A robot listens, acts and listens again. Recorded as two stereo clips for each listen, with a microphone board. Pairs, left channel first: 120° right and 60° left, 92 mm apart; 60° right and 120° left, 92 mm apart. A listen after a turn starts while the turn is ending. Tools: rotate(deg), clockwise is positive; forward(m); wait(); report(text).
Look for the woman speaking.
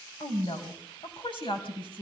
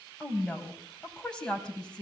rotate(140)
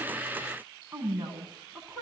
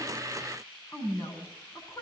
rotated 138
report("Facing the woman speaking.")